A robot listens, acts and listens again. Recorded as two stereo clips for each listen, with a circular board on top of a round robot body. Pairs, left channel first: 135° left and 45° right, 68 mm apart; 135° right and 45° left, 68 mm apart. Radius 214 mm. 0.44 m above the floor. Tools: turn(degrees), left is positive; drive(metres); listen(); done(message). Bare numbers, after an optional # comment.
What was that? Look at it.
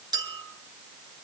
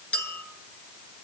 # The clink: 65° right.
turn(-65)
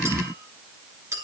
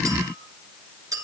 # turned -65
done("Facing the clink, 2 to 4 m away.")